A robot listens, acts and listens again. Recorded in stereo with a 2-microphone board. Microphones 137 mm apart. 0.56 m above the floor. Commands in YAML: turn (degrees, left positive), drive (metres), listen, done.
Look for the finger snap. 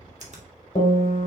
turn: -60
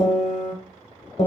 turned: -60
listen: true
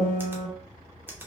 turn: -15
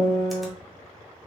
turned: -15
listen: true
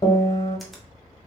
listen: true
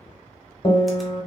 done: "I heard a finger snap from this way, but can't make it out now."